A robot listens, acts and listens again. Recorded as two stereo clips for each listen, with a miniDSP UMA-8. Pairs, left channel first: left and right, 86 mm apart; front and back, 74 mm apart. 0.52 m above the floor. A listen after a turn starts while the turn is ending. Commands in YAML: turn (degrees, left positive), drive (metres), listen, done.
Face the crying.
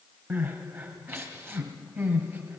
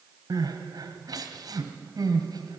turn: -150
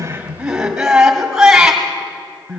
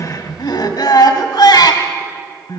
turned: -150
done: "Found it: crying, straight ahead."